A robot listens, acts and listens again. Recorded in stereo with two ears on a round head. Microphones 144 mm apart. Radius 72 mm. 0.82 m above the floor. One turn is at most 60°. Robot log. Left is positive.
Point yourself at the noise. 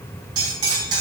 note: The cutlery clinking: about 30° right or 150° right.
cmd yaw -30
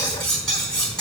end: Facing the cutlery clinking, over 4 m away.